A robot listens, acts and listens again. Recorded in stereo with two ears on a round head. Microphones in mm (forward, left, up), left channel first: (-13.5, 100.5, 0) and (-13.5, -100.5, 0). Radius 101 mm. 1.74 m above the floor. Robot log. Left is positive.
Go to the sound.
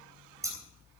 cmd yaw -30
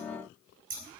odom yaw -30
note: So it is at 135° right.
cmd yaw -135
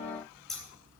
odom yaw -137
cmd fwd 1.0
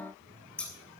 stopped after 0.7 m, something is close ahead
end: Something is in my way. I am facing the scissors but have not reached it.